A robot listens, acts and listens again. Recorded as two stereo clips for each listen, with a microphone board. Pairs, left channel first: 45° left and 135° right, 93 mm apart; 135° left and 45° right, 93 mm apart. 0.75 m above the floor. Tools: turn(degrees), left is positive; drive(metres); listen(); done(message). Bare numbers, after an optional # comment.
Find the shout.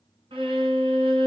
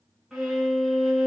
listen()
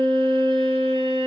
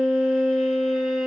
listen()
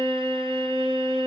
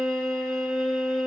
done("I can't make out a shout, only a violin.")